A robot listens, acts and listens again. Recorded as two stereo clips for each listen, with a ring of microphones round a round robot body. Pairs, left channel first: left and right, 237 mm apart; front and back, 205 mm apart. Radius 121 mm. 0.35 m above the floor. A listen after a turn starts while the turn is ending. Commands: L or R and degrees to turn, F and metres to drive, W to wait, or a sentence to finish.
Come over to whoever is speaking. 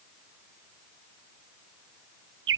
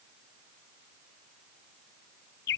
W
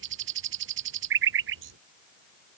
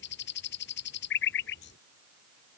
W
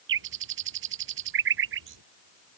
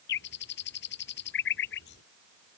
I can't make out anyone speaking to turn to.